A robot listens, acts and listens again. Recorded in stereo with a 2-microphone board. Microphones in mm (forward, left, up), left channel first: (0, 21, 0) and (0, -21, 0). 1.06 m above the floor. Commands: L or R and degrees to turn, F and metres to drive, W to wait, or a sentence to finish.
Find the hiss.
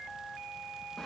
W
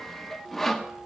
W
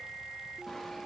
I can't make out a hiss, only sawing.